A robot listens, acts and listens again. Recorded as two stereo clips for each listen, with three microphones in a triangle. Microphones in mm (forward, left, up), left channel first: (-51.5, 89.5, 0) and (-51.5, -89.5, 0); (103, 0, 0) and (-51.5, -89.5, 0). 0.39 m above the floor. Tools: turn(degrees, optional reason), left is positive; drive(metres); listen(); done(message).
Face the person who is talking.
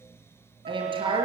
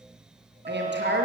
turn(degrees=-150, reason="The woman speaking: 150° right.")
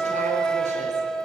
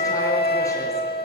listen()
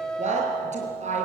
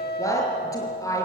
turn(degrees=-40, reason="The woman speaking is now 40° right.")
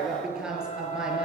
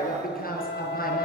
done("Facing the woman speaking, over 4 m away.")